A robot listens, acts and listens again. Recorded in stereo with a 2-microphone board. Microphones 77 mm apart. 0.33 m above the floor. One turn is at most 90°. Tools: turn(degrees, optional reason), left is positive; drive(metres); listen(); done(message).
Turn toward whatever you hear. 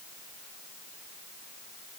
listen()
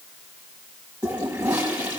turn(degrees=-15, reason="The toilet flushing: about 15° right or 165° right.")
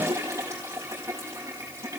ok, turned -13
turn(degrees=-90, reason="So it is at 145° right.")
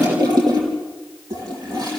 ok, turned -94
turn(degrees=-55, reason="The toilet flushing is now 55° right.")
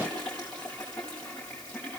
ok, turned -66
turn(degrees=10, reason="The toilet flushing is now 10° left.")
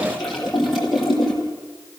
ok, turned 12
done("Facing the toilet flushing.")